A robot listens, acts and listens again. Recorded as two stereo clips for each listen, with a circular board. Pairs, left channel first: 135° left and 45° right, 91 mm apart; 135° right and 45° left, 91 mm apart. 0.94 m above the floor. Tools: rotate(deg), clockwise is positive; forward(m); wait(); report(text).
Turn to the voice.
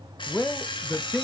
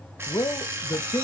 rotate(150)
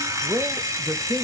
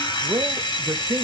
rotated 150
report("Found it: a man speaking, straight ahead, under 1 m away.")